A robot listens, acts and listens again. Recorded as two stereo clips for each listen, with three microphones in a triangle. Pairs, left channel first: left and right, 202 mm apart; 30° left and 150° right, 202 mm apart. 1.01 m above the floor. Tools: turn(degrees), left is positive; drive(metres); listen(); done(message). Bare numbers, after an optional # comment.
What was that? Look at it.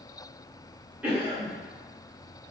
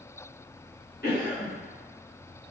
# The cough: 10° right.
turn(-10)
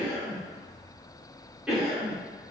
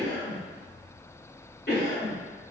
done("Facing the cough.")